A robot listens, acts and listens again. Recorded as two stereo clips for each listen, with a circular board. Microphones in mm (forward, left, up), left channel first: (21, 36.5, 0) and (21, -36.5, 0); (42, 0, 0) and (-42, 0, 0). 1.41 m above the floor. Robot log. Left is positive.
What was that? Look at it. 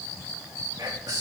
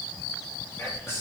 note: The whispering: 60° right.
cmd yaw -60
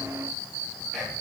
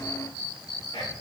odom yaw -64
end: Found it: whispering, straight ahead, 2 to 4 m away.